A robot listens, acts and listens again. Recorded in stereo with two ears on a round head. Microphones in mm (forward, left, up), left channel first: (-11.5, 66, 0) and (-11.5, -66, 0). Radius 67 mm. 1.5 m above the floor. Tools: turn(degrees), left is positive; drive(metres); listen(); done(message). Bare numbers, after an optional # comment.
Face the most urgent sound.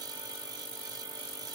listen()
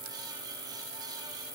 listen()
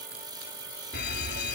# The fire alarm: about 75° left or 105° left.
turn(75)
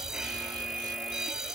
done("Facing the fire alarm.")